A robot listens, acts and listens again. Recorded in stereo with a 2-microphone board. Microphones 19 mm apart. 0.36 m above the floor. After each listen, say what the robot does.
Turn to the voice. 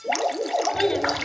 Turn 45° left.
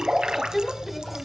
Found it: a child speaking, straight ahead.